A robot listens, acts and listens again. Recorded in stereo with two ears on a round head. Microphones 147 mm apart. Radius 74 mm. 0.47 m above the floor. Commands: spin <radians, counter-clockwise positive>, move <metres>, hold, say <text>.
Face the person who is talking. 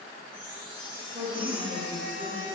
spin -0.35
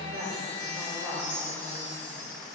spin -2.36
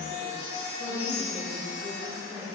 spin -0.44
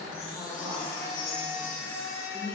say Facing the woman speaking.